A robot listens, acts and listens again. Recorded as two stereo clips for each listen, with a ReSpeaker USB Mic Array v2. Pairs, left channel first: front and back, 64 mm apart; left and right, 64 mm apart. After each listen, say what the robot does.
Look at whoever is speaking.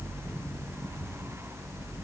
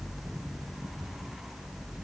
Keep listening.
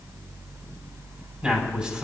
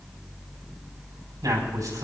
Turn 105° right.
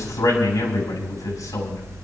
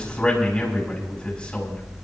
Turn 15° left.
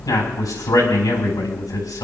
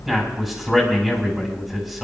Found it: a man speaking, straight ahead.